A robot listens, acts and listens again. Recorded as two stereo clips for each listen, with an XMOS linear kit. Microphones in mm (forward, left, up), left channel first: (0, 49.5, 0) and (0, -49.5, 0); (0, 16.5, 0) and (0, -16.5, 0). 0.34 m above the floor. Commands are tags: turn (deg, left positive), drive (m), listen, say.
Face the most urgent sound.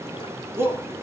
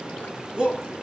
<turn deg="-25"/>
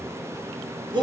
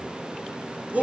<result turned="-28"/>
<turn deg="-125"/>
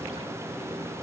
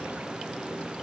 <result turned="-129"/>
<listen/>
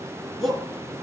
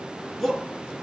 <say>Facing the shout.</say>